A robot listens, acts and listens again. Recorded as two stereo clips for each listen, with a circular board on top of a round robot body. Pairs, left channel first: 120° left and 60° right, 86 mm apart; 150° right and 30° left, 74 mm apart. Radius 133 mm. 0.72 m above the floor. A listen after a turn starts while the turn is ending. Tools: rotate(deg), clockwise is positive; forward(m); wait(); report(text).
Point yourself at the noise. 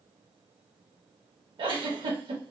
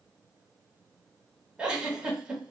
rotate(45)
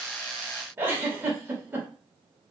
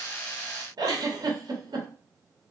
report("Found it: a giggle, straight ahead.")